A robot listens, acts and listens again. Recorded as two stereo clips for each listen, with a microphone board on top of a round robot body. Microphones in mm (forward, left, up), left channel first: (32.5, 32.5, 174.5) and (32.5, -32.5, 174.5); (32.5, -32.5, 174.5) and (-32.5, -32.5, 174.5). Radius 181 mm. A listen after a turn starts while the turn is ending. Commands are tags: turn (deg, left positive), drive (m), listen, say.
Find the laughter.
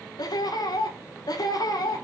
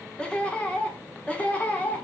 <turn deg="70"/>
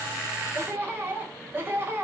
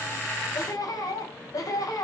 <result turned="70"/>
<turn deg="-30"/>
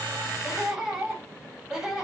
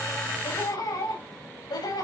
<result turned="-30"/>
<turn deg="-10"/>
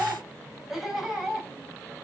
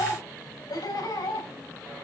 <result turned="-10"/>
<say>Found it: laughter, straight ahead.</say>